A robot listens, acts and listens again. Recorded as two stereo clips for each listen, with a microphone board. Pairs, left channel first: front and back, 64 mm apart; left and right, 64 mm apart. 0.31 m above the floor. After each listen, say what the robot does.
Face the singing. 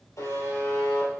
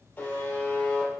Keep listening.
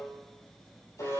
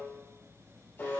Keep listening.
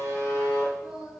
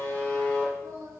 Turn 110° right.
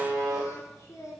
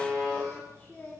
Turn 30° left.
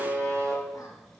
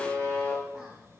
Keep listening.
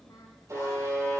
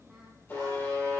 Keep listening.
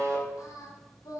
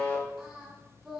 Facing the singing.